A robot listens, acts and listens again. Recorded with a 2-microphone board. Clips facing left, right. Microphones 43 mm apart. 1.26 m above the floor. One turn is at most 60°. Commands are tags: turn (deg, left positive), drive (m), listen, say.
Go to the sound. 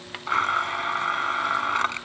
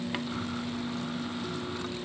<turn deg="60"/>
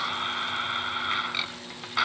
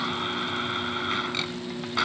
<drive m="1.0"/>
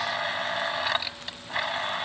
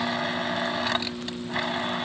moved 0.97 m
<drive m="1.0"/>
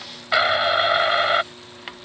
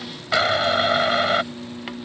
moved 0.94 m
<turn deg="10"/>
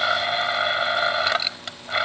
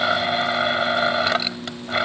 <drive m="1.0"/>
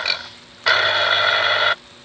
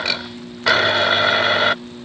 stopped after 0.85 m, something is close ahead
<say>Arrived at the blender, straight ahead.</say>